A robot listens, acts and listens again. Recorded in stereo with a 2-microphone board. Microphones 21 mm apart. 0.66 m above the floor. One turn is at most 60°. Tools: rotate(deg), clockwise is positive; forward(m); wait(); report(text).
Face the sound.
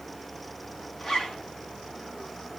rotate(-25)
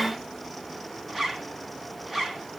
report("Facing the zipper.")